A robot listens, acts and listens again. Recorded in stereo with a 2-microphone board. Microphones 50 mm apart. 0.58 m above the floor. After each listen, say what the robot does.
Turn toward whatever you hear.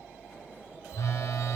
Turn 90° left.
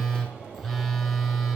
Facing the phone buzzing, 1 to 2 m away.